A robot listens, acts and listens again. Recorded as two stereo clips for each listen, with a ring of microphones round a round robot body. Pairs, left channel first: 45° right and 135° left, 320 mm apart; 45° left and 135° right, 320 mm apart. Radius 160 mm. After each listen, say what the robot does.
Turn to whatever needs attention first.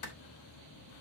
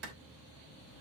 Keep listening.
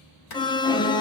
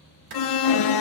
Turn 30° left.
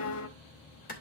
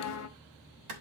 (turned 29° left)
Facing the alarm.